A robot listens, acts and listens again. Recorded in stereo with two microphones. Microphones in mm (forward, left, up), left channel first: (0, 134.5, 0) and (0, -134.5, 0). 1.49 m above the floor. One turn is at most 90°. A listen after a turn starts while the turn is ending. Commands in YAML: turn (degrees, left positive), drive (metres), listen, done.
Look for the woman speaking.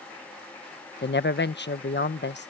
turn: 40
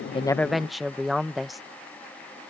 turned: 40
done: "Found it: a woman speaking, straight ahead."